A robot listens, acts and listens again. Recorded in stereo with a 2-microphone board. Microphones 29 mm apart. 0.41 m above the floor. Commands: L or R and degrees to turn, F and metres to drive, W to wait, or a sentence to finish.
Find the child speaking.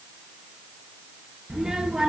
R30
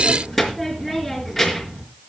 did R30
Found it: a child speaking, straight ahead, over 4 m away.